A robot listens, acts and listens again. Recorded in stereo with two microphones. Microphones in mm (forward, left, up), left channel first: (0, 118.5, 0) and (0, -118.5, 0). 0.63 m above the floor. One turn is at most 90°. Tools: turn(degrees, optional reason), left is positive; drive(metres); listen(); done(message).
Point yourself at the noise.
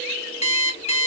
turn(degrees=25, reason="The alarm clock: about 25° left or 155° left.")
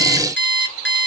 turn(degrees=90, reason="So it is at 125° left.")
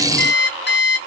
turn(degrees=50, reason="The alarm clock is now 50° left.")
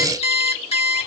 turn(degrees=25, reason="The alarm clock is now 25° left.")
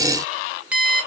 done("Found it: an alarm clock, straight ahead, under 1 m away.")